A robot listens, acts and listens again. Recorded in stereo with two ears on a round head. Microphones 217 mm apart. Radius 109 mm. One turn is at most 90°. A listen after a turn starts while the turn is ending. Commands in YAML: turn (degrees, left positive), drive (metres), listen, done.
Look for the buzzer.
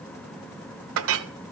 listen: true
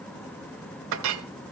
listen: true
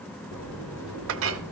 turn: 55
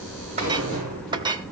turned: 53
done: "Facing the buzzer, over 4 m away."